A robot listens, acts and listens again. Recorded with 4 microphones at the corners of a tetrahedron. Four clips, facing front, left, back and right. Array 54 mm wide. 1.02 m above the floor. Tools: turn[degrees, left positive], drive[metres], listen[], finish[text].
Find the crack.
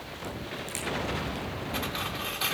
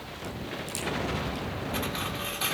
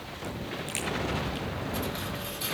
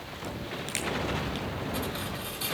Thought: The crack: 95° right.
Action: turn[-95]
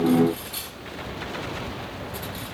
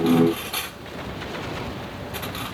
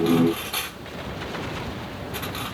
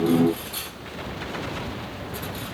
Action: finish[I heard a crack from this way, but can't make it out now.]